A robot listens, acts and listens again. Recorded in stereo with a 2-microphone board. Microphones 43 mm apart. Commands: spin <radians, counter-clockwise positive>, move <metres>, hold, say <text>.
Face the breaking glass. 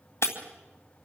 spin 1.57
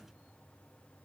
say Facing where the breaking glass came from. I can't hear it now.